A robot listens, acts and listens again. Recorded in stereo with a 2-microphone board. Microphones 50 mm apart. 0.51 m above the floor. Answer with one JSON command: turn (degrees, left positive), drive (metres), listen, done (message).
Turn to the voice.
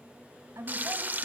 {"turn": -70}
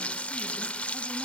{"listen": true}
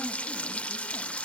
{"listen": true}
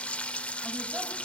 {"done": "I heard a woman speaking, but can't make it out now. It was about straight ahead or 40° right."}